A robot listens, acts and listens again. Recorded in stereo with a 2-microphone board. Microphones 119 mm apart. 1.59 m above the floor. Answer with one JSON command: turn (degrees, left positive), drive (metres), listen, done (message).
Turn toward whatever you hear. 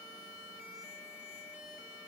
{"listen": true}
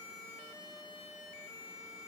{"listen": true}
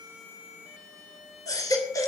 {"turn": 30}
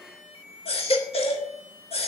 {"turn": 120}
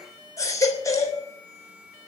{"turn": 30}
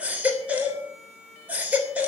{"turn": -15}
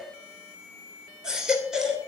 {"done": "Found it: a baby crying, straight ahead."}